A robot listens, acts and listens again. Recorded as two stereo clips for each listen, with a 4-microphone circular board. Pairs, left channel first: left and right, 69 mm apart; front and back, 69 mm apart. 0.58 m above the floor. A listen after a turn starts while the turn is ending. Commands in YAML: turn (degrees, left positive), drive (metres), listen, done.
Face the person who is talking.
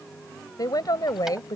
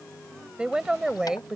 turn: 100
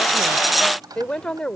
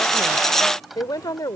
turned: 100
turn: 10
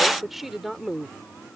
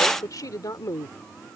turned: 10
turn: -10
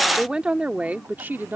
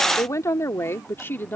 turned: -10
turn: -45
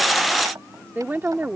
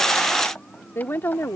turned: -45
turn: -40
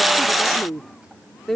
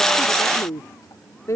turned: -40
done: "Facing the woman speaking."